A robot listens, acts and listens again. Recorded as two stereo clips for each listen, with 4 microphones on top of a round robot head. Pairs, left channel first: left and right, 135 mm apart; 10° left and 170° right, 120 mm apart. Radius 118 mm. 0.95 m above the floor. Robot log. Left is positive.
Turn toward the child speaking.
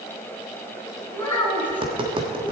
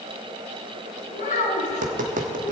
note: The child speaking: 15° left.
cmd yaw +15
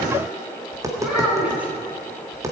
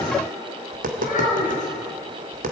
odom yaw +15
note: The child speaking is now 10° right.
cmd yaw -10
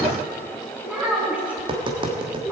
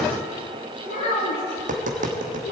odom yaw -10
note: The child speaking is now 10° right.
cmd yaw -10
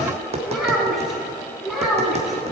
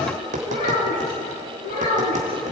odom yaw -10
end: Found it: a child speaking, straight ahead.